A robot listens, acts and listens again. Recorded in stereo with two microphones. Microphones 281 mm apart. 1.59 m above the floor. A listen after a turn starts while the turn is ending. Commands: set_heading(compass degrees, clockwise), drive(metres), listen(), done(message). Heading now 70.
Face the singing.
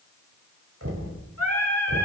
set_heading(0)
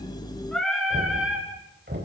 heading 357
done("Facing the singing, 2 to 4 m away.")